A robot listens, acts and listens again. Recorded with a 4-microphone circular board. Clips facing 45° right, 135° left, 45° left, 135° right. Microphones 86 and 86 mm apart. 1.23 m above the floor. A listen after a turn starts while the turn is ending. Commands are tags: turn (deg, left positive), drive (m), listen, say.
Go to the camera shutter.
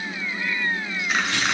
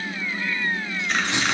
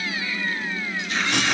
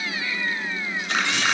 <turn deg="-130"/>
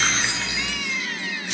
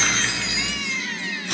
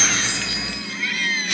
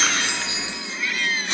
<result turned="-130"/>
<listen/>
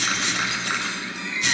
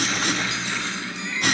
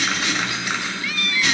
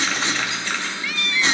<turn deg="-30"/>
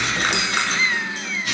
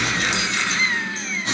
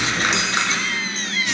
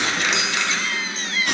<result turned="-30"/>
<drive m="1.0"/>
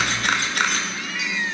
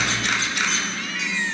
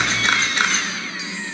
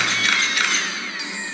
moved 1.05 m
<turn deg="-10"/>
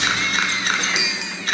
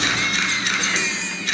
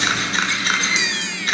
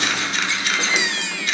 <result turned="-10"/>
<drive m="1.0"/>
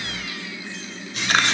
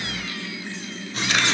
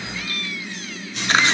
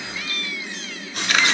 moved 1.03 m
<turn deg="-10"/>
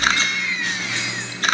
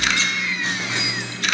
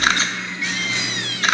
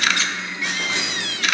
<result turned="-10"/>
<drive m="1.0"/>
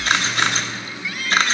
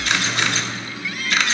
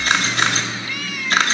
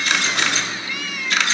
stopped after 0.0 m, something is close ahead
<say>Arrived at the camera shutter, straight ahead.</say>